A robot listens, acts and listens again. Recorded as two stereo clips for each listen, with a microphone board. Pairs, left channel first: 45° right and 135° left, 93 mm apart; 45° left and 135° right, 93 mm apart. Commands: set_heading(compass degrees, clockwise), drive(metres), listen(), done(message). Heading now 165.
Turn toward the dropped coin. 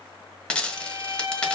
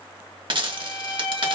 set_heading(290)
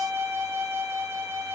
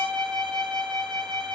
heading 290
done("Facing where the dropped coin came from. I can't hear it now.")